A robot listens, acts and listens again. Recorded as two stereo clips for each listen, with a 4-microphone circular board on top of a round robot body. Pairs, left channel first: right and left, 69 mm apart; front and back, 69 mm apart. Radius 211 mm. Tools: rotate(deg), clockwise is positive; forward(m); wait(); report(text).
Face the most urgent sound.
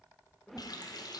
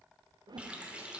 wait()
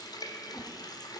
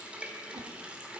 wait()
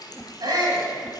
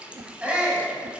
rotate(-105)
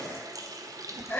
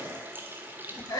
rotate(25)
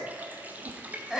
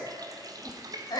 rotate(-10)
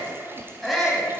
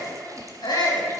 report("Facing the shout.")